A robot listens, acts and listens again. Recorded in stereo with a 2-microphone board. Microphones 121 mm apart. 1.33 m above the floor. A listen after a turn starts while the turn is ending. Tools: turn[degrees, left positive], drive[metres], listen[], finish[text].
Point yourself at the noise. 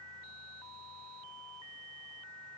Action: listen[]
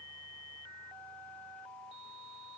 Action: listen[]
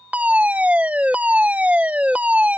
Action: turn[-30]
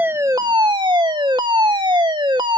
Thought: So it is at 135° right.
Action: turn[-135]
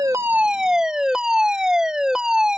Action: finish[Facing the fire alarm.]